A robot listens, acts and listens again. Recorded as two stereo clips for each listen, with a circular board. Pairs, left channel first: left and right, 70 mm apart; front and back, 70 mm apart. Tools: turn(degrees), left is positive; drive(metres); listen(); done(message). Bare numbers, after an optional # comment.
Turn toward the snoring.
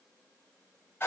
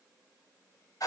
listen()
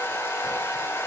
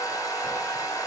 listen()
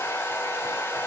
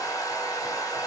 done("I can't make out snoring to turn to.")